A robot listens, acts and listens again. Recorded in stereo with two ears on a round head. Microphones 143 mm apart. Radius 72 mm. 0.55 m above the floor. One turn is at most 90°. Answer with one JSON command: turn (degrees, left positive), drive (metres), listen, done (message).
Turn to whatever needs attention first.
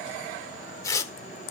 {"listen": true}
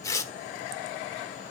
{"listen": true}
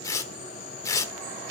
{"done": "I can't make out anything urgent to turn to."}